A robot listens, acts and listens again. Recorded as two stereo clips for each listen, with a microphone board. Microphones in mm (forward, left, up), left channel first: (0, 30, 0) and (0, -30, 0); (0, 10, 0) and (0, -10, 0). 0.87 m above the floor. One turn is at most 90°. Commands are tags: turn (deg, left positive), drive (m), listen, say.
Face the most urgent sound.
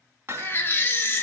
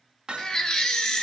<turn deg="40"/>
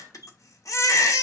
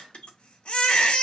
<turn deg="90"/>
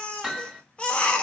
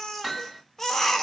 <turn deg="20"/>
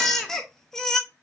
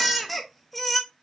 <turn deg="10"/>
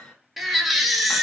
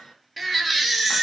<say>Found it: a baby crying, straight ahead.</say>